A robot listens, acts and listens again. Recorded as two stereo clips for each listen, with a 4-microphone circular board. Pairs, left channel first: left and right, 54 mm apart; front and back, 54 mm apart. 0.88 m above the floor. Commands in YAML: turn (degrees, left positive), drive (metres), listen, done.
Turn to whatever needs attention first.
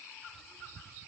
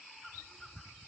listen: true
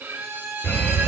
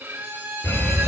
turn: 40
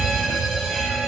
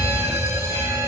done: "Facing the fire alarm."